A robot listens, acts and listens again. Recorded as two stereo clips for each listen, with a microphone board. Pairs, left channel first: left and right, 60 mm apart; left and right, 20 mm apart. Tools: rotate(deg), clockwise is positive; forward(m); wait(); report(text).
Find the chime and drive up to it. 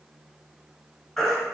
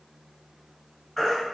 wait()
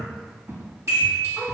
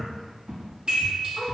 rotate(55)
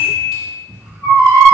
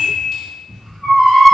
rotate(15)
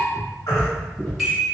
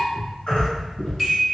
forward(1.0)
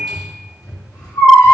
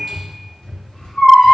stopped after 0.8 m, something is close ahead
report("I am next to the chime.")